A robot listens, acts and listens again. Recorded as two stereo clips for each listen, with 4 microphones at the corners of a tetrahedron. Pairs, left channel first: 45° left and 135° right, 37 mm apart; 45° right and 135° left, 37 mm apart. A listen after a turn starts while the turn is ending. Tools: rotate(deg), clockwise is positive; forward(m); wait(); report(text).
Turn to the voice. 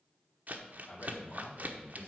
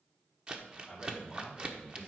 rotate(-70)
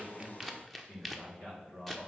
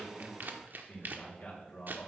report("Facing the man speaking, 2 to 4 m away.")